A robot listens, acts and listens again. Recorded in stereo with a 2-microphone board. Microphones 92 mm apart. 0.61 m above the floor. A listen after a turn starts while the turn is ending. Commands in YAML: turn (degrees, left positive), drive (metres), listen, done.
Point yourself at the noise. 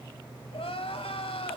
turn: 90
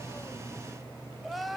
done: "Facing the crying, 1 to 2 m away."